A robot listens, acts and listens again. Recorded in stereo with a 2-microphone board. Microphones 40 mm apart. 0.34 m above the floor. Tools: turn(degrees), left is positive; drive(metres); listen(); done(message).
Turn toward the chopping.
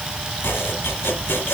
turn(degrees=90)
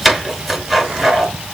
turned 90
done("Facing the chopping, 2 to 4 m away.")